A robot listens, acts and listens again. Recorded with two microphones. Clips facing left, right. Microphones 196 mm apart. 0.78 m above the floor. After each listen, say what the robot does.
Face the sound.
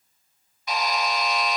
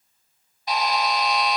Turn 35° right.
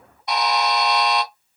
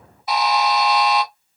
Found it: a buzzer, straight ahead, 1 to 2 m away.